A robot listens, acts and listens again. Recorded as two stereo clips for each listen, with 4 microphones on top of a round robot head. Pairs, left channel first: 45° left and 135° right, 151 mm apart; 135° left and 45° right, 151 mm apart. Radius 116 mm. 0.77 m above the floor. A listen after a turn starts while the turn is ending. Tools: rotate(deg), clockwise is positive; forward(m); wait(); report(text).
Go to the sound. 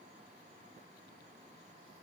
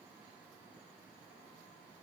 wait()
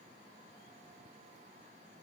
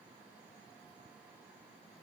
wait()
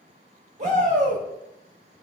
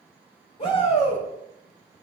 rotate(175)
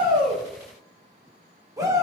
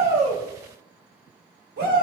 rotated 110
rotate(65)
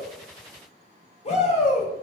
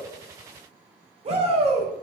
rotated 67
forward(1.0)
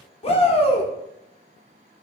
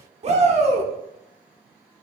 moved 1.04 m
forward(1.0)
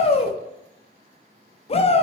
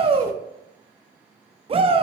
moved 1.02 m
forward(1.0)
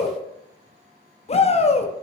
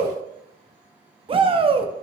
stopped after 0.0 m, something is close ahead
report("Arrived at the shout, straight ahead.")